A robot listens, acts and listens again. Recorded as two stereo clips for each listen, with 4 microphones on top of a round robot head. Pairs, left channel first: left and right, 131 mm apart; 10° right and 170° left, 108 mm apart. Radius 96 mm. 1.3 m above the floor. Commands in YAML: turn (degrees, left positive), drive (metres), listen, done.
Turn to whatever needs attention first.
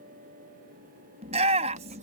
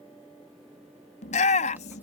turn: -40
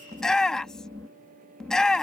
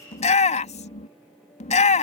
done: "Facing the shout."